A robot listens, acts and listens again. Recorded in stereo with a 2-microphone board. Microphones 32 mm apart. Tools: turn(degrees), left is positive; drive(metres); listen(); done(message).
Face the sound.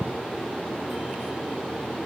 listen()
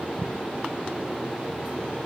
listen()
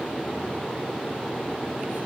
done("I can't make out anything.")